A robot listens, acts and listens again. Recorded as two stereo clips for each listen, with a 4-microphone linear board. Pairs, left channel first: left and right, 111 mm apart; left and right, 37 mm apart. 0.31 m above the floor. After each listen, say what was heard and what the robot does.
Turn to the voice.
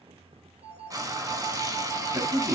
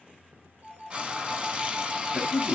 The man speaking: about 30° right or 150° right. Turn 30° right.
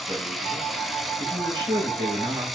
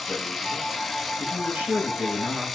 So it is at 115° right. Turn 115° right.
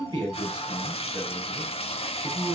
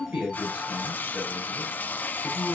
The man speaking is now 35° right. Turn 35° right.
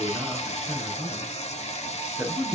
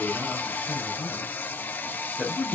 The man speaking is now 10° right. Turn 10° right.
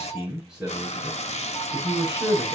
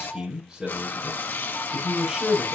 Found it: a man speaking, straight ahead, over 4 m away.